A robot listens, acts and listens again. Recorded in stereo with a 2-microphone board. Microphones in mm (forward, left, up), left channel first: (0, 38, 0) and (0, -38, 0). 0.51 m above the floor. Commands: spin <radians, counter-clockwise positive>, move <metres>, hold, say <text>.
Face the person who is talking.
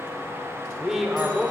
spin 0.52
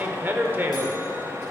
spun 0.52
spin -0.52
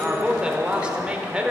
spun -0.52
spin -0.26
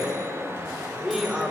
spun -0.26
say Facing the man speaking, 1 to 2 m away.